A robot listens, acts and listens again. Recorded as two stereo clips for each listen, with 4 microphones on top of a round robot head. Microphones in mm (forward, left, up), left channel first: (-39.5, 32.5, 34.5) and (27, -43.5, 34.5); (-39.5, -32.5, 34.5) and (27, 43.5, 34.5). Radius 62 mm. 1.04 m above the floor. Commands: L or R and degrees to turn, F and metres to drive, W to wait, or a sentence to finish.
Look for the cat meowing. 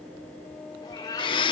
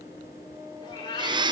L180
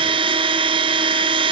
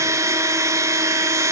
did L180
W
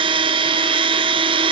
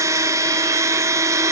W
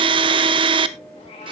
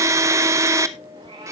L90
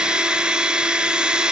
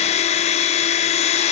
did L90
W
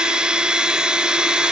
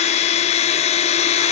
W
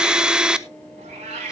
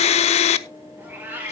R25
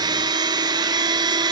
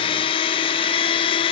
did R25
W
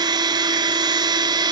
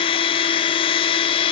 W
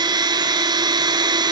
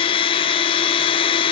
Facing where the cat meowing came from. I can't hear it now.